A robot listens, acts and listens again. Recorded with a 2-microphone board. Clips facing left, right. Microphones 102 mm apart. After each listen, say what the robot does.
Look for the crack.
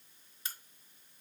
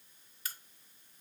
Turn 25° left.
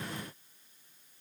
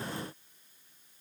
Keep listening.
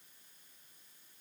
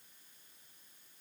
I heard a crack, but can't make it out now. It was about straight ahead or 130° left.